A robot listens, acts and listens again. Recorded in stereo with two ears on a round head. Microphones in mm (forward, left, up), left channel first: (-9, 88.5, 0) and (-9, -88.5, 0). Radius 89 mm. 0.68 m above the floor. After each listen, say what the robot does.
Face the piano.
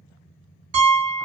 Turn 60° right.
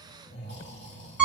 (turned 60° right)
Turn 10° right.
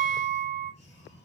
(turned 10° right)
Found it: a piano, straight ahead, 1 to 2 m away.